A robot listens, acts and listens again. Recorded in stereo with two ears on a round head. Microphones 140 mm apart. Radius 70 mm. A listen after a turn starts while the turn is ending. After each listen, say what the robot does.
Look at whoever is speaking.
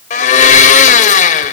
Keep listening.
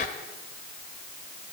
Keep listening.
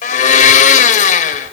I can't make out anyone speaking to turn to.